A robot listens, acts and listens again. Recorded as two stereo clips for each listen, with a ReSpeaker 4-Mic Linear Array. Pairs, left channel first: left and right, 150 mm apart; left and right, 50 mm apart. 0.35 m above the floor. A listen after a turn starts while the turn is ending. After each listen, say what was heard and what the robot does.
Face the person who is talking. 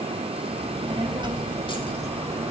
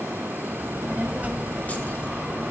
The child speaking: about 15° right or 165° right. Turn 15° right.
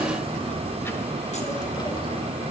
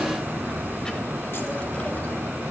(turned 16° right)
So it is at 35° left. Turn 35° left.
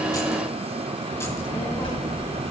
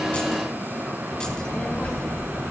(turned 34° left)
The child speaking is now 40° left. Turn 40° left.
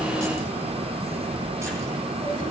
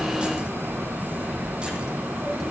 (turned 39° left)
Facing the child speaking.